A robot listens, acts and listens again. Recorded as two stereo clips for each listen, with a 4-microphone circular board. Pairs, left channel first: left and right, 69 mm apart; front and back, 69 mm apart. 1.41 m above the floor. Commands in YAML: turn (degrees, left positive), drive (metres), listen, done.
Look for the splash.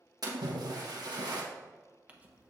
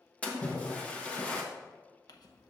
turn: -75
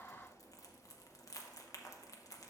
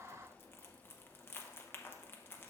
done: "Facing where the splash came from. I can't hear it now."